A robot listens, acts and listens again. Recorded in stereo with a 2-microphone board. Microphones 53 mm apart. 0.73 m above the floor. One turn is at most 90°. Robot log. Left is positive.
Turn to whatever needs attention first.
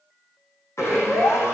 note: The siren: about 70° left or 110° left.
cmd yaw +70
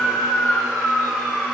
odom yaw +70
note: So it is at 30° left.
cmd yaw +30
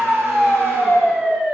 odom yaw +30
end: Facing the siren, 2 to 4 m away.